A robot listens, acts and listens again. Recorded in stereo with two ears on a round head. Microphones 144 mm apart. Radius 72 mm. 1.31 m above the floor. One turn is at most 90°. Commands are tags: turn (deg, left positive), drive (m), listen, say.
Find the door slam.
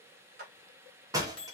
<turn deg="-20"/>
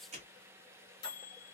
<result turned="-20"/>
<listen/>
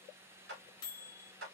<say>I heard a door slam, but can't make it out now. It was about straight ahead or 140° right.</say>